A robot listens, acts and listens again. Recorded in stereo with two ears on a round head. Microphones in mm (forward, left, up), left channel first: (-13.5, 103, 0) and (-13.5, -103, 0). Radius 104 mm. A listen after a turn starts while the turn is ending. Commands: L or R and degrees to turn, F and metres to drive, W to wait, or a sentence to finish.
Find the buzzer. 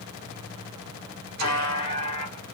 L90
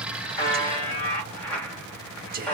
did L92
Found it: a buzzer, straight ahead.